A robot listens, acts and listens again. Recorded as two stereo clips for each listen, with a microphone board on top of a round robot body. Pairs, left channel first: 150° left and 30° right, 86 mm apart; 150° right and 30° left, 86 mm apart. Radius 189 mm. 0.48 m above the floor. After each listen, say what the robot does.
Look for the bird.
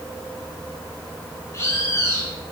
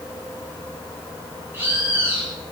Turn 90° left.
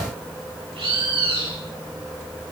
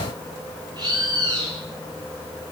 Turn 10° right.
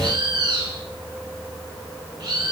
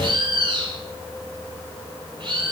Found it: a bird, straight ahead.